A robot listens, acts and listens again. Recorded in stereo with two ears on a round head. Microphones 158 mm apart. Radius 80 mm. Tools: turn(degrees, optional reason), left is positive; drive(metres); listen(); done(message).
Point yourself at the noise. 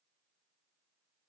listen()
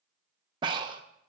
turn(degrees=-25, reason="The breathing: about 25° right or 155° right.")
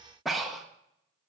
done("Found it: breathing, straight ahead, under 1 m away.")